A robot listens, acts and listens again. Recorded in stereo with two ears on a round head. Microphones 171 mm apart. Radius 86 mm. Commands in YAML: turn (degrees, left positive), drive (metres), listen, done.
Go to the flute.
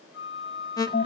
turn: 90
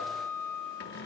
turn: 10
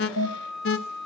drive: 1.0
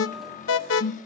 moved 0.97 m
listen: true
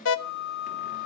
drive: 1.0
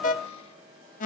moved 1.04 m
listen: true
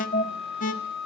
drive: 1.0
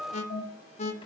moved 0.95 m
drive: 1.0
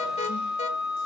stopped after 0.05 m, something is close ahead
done: "I am next to the flute."